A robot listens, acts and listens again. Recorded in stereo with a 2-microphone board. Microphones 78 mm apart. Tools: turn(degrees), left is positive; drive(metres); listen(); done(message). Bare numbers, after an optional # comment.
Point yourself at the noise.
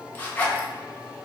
# The zipper: about 20° left or 160° left.
turn(20)
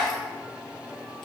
done("Found it: a zipper, straight ahead.")